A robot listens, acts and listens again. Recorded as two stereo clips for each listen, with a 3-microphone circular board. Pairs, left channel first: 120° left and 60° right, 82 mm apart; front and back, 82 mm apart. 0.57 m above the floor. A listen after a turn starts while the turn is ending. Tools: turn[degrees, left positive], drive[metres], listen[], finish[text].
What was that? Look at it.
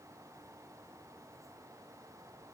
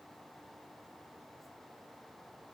Action: listen[]
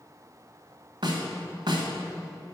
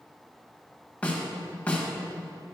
Thought: The snare drum: 75° right.
Action: turn[-75]
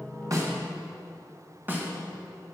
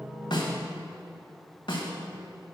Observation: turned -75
Action: finish[Found it: a snare drum, straight ahead.]